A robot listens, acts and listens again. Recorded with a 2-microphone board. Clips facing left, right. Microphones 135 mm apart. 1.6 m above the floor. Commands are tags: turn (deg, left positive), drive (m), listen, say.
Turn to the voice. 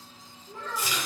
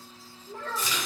<turn deg="-55"/>
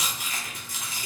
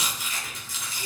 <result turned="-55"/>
<listen/>
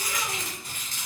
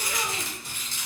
<listen/>
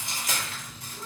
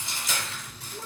<say>I heard a child speaking, but can't make it out now. It was about straight ahead or 70° right.</say>